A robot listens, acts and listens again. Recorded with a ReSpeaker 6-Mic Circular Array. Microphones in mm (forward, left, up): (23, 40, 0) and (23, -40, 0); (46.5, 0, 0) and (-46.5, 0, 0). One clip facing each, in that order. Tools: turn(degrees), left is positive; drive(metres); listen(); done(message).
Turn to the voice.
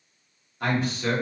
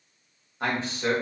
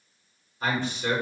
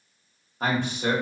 turn(degrees=-150)
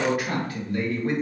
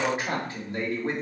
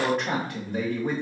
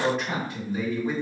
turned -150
turn(degrees=-30)
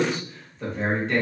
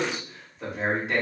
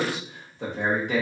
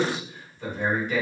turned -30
turn(degrees=-10)
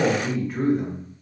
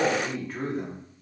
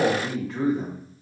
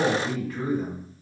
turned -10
done("Facing the man speaking.")